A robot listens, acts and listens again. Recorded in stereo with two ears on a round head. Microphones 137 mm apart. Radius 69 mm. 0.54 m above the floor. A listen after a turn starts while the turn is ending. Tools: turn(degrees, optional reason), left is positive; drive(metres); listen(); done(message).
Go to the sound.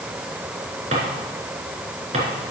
turn(degrees=-45, reason="The drawer: about 45° right or 135° right.")
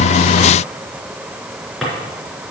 drive(metres=1.0)
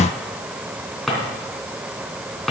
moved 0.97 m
drive(metres=1.0)
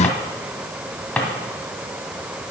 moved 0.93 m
turn(degrees=10, reason="The drawer is now 10° left.")
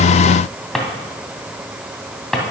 drive(metres=1.0)
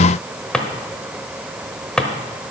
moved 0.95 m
drive(metres=1.0)
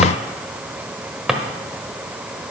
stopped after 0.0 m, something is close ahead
done("I am next to the drawer.")